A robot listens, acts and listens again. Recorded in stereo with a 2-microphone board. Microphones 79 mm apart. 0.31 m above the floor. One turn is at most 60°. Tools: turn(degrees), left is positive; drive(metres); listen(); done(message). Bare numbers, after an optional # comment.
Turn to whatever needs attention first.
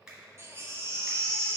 # The baby crying: about 35° right or 145° right.
turn(-35)
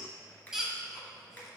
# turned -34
done("Found it: a baby crying, straight ahead, under 1 m away.")